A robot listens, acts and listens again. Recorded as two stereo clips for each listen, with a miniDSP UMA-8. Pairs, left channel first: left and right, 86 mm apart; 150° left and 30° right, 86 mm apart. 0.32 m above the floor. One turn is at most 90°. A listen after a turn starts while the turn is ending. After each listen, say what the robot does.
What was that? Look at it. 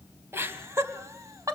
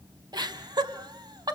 Turn 50° right.
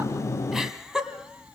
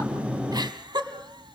Turn 10° right.
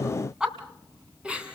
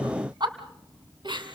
Turn 15° right.
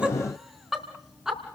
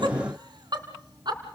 Facing the laughter, 2 to 4 m away.